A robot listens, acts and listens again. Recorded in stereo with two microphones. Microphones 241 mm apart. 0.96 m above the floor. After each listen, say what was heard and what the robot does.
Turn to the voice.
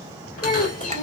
The child speaking: about 30° left or 150° left. Turn 30° left.
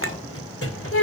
So it is at 115° left. Turn 115° left.
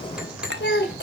The child speaking is now 45° left. Turn 45° left.
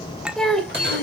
Found it: a child speaking, straight ahead, 2 to 4 m away.